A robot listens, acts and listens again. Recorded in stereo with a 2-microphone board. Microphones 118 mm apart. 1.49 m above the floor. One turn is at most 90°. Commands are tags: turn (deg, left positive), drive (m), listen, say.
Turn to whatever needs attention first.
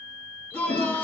<turn deg="30"/>
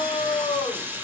<turn deg="90"/>
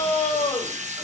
<turn deg="60"/>
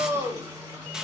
<turn deg="-20"/>
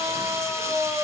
<say>Facing the shout.</say>